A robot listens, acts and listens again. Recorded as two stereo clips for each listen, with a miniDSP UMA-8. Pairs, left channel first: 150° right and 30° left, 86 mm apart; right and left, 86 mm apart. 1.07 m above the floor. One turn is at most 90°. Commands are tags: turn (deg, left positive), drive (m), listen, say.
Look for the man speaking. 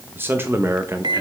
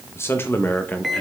<turn deg="-20"/>
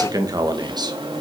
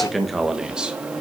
<turn deg="10"/>
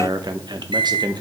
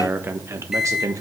<turn deg="50"/>
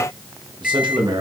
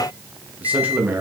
<turn deg="25"/>
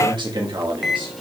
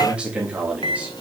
<turn deg="15"/>
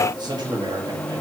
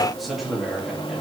<say>Found it: a man speaking, straight ahead.</say>